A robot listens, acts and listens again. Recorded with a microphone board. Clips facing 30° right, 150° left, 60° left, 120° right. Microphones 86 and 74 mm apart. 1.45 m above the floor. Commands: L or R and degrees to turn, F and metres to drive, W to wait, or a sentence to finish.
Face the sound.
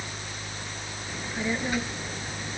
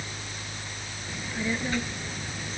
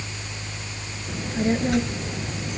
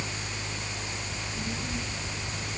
L45
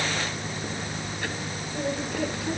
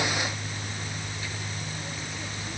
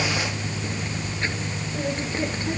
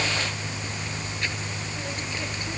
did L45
W
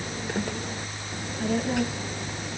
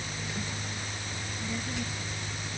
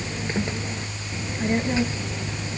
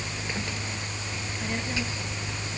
Facing the child speaking.